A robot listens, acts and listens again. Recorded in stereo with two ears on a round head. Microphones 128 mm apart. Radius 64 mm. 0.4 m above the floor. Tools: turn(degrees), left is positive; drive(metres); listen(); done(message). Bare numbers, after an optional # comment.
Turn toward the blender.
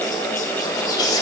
listen()
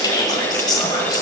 listen()
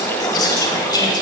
done("I can't make out a blender, only whispering.")